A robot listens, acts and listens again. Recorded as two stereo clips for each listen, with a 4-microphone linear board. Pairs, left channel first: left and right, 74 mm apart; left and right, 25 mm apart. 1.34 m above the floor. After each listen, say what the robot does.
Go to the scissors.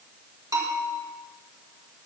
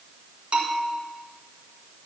Keep listening.
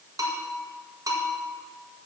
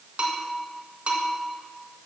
Keep listening.
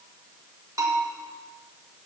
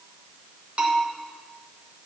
I can't make out scissors to turn to.